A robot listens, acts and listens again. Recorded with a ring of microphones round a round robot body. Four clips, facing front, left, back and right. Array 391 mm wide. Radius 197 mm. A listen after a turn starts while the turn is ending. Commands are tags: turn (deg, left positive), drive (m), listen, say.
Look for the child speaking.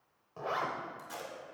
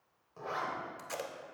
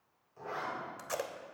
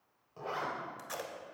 <listen/>
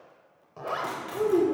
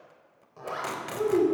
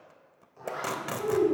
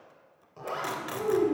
<turn deg="35"/>
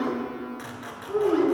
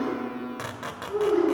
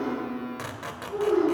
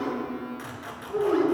<turn deg="-15"/>
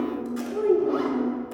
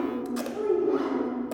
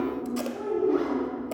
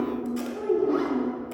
<say>Facing the child speaking.</say>